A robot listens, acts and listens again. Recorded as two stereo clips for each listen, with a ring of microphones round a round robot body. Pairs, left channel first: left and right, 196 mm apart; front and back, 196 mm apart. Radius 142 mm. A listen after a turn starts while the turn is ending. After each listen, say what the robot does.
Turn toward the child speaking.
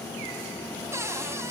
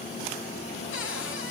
Keep listening.
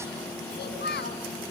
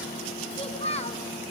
Turn 55° left.
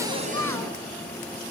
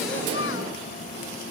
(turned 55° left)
Keep listening.
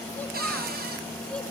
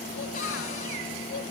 Keep listening.
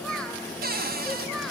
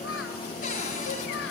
I heard a child speaking from this way, but can't make it out now.